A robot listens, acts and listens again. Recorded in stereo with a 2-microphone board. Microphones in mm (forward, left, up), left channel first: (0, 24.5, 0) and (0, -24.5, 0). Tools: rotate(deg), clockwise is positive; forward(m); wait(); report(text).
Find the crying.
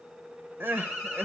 rotate(45)
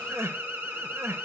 rotate(85)
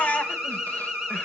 rotate(-35)
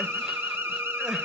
wait()
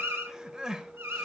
rotate(15)
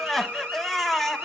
report("Facing the crying, under 1 m away.")